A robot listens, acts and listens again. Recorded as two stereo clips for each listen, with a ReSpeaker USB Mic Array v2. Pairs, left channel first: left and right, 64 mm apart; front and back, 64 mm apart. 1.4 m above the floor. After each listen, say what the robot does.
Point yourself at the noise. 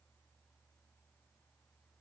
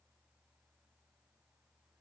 Keep listening.
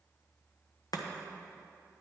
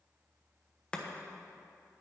Turn 75° left.
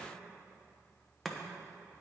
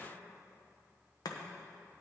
Found it: chopping, straight ahead, 1 to 2 m away.